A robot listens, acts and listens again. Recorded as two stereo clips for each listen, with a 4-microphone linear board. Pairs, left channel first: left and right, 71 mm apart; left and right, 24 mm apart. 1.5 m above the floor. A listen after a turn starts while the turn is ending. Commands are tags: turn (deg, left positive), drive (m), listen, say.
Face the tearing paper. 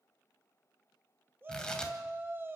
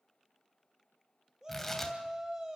<turn deg="30"/>
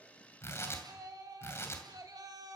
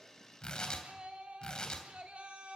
<turn deg="140"/>
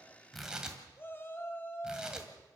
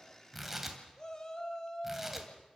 <turn deg="-10"/>
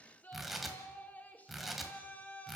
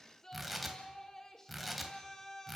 <say>Found it: tearing paper, straight ahead, 2 to 4 m away.</say>